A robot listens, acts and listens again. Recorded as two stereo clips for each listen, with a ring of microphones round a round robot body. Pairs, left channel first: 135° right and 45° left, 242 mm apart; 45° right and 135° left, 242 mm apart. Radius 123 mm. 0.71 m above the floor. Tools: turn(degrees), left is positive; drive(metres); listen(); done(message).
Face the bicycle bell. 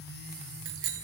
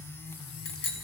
done("Facing the bicycle bell.")